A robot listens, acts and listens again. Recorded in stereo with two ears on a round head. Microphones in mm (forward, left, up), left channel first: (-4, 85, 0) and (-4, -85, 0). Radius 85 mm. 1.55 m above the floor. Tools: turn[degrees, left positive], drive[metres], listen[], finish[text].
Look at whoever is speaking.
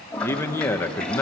Action: turn[30]
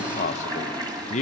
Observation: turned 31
Thought: So it is at 135° left.
Action: turn[135]
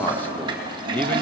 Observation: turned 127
Thought: Nothing new. It was at 10° left.
Action: turn[10]
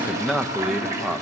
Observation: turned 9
Action: finish[Facing the man speaking, 1 to 2 m away.]